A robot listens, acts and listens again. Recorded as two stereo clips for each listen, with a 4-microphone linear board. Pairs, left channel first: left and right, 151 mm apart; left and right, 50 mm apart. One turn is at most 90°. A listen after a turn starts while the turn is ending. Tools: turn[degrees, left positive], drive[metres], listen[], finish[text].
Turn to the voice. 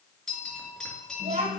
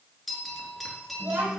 Thought: The child speaking: about 50° right or 130° right.
Action: turn[-50]
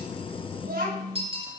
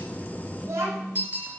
Thought: So it is at 80° right.
Action: turn[-80]
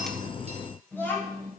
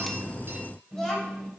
Thought: The child speaking is now 15° left.
Action: turn[15]
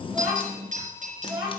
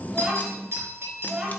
Action: finish[Found it: a child speaking, straight ahead.]